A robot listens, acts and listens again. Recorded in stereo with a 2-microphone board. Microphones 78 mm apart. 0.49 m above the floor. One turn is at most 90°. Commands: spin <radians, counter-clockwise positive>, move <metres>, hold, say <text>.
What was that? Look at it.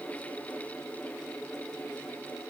hold
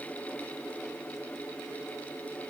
hold
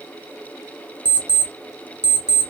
spin -0.35
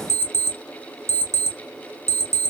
spin -1.57
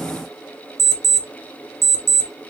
spin -0.79
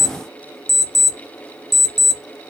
say Found it: an alarm clock, straight ahead.